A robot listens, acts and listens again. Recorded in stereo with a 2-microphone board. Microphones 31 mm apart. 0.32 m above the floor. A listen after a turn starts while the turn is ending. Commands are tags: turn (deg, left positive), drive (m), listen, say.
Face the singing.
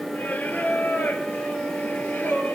<turn deg="90"/>
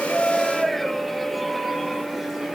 <say>Facing the singing, 2 to 4 m away.</say>